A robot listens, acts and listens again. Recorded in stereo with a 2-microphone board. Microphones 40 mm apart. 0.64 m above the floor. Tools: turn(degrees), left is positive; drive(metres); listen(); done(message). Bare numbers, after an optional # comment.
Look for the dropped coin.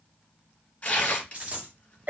# The dropped coin: about 40° right or 140° right.
turn(-40)
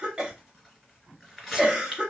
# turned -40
listen()
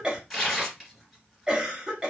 done("I heard a dropped coin, but can't make it out now. It was about straight ahead or 100° right.")